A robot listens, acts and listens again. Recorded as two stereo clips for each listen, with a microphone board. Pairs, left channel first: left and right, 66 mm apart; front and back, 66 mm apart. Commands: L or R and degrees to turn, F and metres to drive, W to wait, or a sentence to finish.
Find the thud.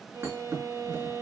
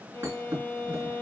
R135
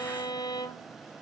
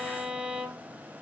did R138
Facing where the thud came from. I can't hear it now.